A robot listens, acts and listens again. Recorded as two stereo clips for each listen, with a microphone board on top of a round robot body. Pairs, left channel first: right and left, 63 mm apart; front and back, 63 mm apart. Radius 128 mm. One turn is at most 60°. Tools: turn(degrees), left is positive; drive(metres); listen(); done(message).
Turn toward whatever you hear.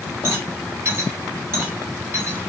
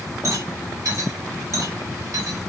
turn(degrees=60)
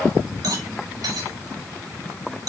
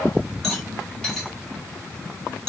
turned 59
turn(degrees=60)
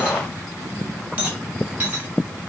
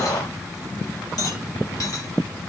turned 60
turn(degrees=25)
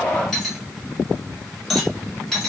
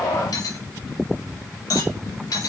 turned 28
done("Facing the rattle, over 4 m away.")